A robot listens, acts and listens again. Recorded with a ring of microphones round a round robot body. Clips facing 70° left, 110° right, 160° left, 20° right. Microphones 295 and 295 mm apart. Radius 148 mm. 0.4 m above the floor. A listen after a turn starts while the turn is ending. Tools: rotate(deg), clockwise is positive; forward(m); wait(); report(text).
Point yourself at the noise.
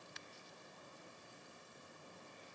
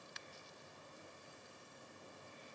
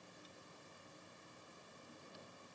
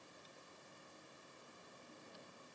wait()
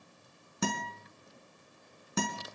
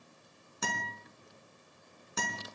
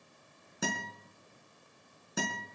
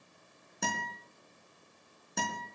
rotate(-70)
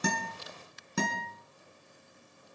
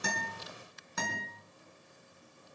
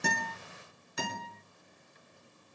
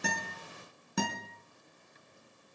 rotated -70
rotate(-15)
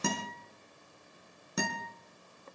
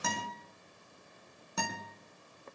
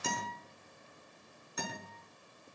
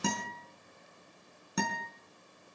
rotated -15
report("Facing the guitar, over 4 m away.")